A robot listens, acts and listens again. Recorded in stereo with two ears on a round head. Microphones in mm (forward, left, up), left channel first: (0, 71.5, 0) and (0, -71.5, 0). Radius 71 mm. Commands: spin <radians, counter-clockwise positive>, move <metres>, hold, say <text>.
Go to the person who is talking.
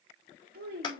spin -1.13
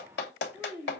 spin -0.26
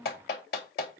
move 1.0
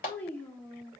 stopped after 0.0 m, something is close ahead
spin 0.17
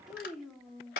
say Something is in my way. I am facing the child speaking but have not reached it.